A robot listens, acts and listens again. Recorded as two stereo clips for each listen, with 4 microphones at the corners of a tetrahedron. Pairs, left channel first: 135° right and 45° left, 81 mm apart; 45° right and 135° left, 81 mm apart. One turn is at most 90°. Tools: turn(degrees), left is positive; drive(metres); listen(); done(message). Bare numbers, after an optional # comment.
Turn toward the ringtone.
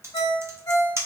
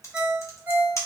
# The ringtone: 150° right.
turn(-90)
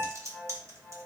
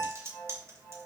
# The ringtone is now 65° right.
turn(-65)
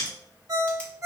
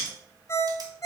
done("Found it: a ringtone, straight ahead.")